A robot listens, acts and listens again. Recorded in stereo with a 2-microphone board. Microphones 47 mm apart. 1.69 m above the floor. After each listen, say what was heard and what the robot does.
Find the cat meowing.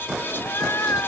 Turn 90° left.
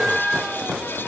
So it is at 10° right. Turn 10° right.
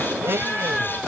Keep listening.
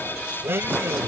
Keep listening.
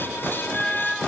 Found it: a cat meowing, straight ahead.